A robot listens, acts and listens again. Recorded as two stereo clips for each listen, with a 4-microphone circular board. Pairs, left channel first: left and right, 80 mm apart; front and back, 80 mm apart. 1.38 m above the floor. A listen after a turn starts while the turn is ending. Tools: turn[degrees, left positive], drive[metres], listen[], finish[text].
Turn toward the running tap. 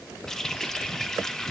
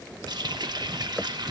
Thought: The running tap: 175° left.
Action: turn[175]
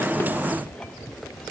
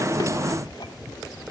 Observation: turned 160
Thought: Nothing new. It was at 15° left.
Action: turn[15]
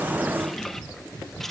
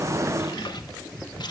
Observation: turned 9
Action: finish[Found it: a running tap, straight ahead.]